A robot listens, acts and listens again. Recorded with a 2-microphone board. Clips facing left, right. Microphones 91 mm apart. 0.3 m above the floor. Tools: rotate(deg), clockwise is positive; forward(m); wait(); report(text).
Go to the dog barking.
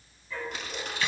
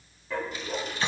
rotate(90)
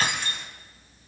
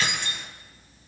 wait()
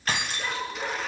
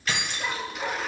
rotate(-10)
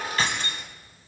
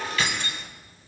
wait()
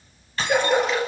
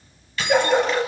forward(1.0)
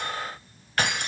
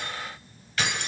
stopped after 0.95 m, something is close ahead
wait()
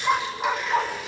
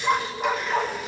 report("Arrived at the dog barking, straight ahead.")